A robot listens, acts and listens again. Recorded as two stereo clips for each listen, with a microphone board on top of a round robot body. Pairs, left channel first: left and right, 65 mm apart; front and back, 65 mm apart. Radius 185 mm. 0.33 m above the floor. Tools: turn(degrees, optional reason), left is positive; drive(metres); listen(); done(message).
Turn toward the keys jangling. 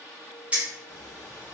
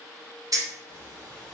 turn(degrees=-160, reason="The keys jangling: 160° right.")
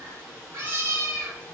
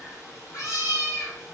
listen()
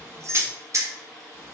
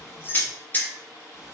turn(degrees=-60, reason="The keys jangling is now 60° right.")
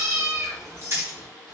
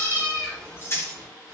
turn(degrees=-40, reason="The keys jangling is now 40° right.")
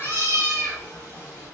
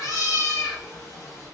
listen()
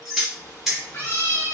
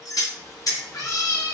done("Found it: keys jangling, straight ahead, 1 to 2 m away.")